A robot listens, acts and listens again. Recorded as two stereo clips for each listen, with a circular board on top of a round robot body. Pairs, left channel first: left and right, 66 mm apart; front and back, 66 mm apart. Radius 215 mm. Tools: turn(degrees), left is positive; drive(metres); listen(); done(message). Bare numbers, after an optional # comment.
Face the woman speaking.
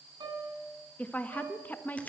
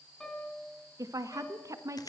# The woman speaking: 150° left.
turn(150)
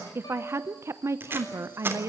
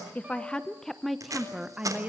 # The woman speaking is now 120° right.
turn(-120)
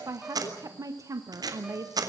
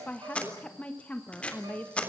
# The woman speaking is now 65° right.
turn(-65)
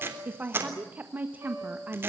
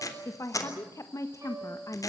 # The woman speaking is now 30° right.
turn(-30)
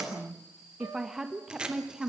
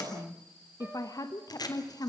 done("Facing the woman speaking, 1 to 2 m away.")